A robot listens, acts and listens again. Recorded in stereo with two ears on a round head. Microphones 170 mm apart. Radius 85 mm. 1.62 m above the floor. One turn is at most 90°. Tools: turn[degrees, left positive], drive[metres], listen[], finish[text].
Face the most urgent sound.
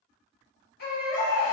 Thought: The baby crying: about 55° left or 125° left.
Action: turn[55]
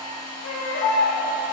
Thought: So it is at 55° left.
Action: turn[55]
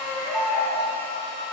Action: finish[Found it: a baby crying, straight ahead.]